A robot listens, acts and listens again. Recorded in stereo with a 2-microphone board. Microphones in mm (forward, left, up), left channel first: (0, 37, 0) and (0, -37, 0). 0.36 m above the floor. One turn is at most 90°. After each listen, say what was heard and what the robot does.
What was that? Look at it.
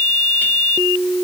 Keep listening.
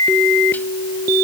Keep listening.
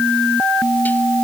I can't make out anything.